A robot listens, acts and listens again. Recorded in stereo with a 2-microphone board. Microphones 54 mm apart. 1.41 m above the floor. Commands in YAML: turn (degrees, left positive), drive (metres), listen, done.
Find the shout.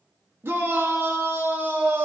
turn: -50
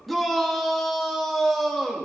done: "Found it: a shout, straight ahead."